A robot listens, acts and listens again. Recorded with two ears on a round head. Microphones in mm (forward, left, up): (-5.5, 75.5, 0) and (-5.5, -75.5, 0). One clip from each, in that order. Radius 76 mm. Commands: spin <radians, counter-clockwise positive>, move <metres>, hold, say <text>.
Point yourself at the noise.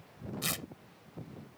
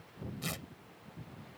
spin 0.61
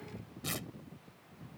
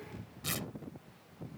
say Facing the tearing paper.